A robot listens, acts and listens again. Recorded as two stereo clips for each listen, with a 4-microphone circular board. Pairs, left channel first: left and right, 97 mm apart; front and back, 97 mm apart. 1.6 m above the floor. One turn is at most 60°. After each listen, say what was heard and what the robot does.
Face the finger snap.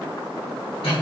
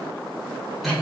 Keep listening.
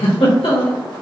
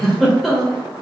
Keep listening.
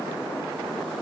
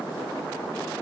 I can't make out a finger snap, only a giggle.